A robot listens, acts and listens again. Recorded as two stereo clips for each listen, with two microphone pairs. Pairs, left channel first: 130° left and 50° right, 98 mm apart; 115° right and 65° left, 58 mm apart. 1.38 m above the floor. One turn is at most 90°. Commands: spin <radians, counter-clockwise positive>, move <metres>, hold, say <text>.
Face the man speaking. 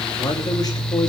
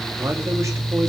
spin 1.48
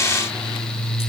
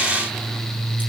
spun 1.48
hold
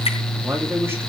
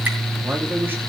spin 0.26
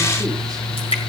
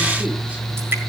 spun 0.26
hold
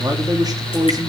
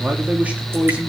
say Found it: a man speaking, straight ahead, 2 to 4 m away.